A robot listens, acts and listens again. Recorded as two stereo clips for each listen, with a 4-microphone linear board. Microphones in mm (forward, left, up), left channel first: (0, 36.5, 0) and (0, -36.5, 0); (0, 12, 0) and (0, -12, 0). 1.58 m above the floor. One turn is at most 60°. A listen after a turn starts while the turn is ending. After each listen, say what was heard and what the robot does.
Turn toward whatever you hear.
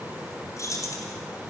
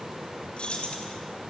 The keys jangling: about 50° left or 130° left. Turn 50° left.
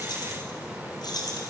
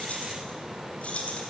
So it is at 70° left. Turn 60° left.
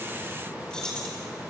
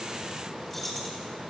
The keys jangling is now 10° left. Turn 10° left.
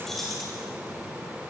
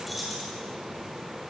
Found it: keys jangling, straight ahead.